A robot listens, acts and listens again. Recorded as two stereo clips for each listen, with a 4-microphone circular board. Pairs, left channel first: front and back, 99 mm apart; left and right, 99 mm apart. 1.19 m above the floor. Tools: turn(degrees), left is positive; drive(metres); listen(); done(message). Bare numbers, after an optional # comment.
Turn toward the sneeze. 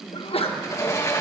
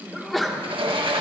done("Found it: a sneeze, straight ahead.")